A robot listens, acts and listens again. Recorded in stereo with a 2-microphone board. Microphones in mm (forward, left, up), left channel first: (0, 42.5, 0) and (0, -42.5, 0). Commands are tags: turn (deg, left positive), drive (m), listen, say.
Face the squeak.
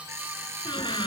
<turn deg="70"/>
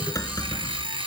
<turn deg="40"/>
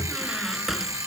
<say>Facing the squeak.</say>